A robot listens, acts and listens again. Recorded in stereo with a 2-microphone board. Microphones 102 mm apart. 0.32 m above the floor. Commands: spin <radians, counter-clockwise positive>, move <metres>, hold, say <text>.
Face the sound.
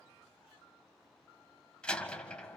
spin 0.52
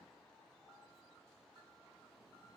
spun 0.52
hold
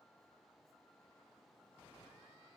say I heard a door slam, but can't make it out now. It was about 20° right or 140° left.